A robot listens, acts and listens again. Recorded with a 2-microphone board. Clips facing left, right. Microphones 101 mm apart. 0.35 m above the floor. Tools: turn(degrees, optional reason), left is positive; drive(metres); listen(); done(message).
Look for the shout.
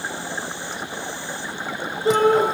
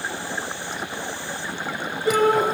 turn(degrees=25, reason="The shout: about 25° left or 155° left.")
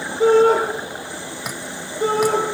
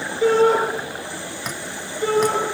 turn(degrees=130, reason="So it is at 130° left.")
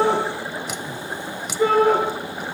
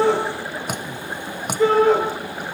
turn(degrees=10, reason="The shout is now 10° left.")
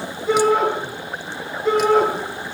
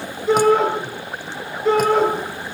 done("Found it: a shout, straight ahead.")